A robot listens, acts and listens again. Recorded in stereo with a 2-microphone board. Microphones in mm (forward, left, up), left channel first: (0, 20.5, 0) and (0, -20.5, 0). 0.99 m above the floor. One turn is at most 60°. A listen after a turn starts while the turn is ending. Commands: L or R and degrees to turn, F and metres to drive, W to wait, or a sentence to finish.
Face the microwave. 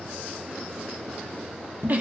W
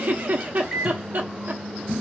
L30
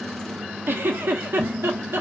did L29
W
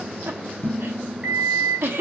R30
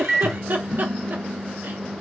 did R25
Facing the microwave, under 1 m away.